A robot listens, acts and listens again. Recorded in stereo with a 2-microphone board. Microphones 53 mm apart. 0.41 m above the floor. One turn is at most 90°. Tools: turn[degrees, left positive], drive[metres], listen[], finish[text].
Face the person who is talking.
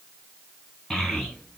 Action: turn[30]
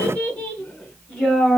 Action: turn[30]
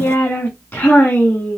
Thought: So it is at 155° left.
Action: turn[90]
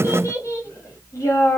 Thought: The child speaking is now 65° left.
Action: turn[65]
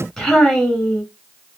Action: finish[Found it: a child speaking, straight ahead, 2 to 4 m away.]